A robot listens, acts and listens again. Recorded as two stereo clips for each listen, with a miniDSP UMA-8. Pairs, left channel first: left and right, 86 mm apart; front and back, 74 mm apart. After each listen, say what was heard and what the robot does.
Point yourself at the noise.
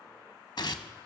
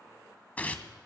The tearing paper: 65° left. Turn 65° left.
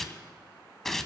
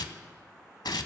Found it: tearing paper, straight ahead.